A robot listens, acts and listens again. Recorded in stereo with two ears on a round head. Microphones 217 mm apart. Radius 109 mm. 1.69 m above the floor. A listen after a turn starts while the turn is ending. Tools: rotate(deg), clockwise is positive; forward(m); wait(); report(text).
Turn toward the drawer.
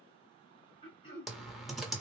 wait()
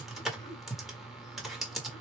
wait()
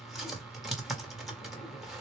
report("I can't make out a drawer to turn to.")